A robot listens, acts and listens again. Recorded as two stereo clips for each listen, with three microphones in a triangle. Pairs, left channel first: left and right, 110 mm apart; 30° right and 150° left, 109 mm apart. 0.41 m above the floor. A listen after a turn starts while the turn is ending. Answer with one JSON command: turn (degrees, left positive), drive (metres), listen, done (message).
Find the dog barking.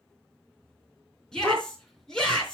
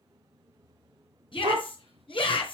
{"turn": 180}
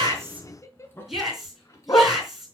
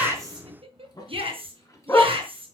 {"turn": 30}
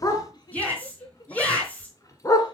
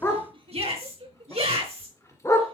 {"turn": 30}
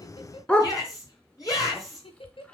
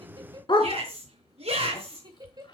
{"turn": 10}
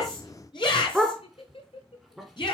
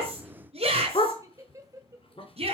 {"done": "Found it: a dog barking, straight ahead, 2 to 4 m away."}